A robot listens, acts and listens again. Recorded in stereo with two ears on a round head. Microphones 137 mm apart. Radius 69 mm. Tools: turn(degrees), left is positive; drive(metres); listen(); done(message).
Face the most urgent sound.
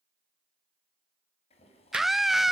turn(degrees=30)
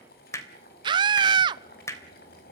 turn(degrees=-35)
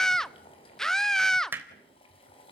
done("Found it: a scream, straight ahead, under 1 m away.")